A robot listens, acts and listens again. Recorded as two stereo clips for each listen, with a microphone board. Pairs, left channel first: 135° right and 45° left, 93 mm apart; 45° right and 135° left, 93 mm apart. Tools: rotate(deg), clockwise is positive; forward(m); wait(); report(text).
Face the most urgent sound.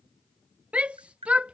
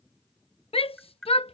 rotate(30)
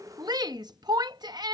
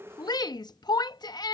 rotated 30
report("Facing the shout.")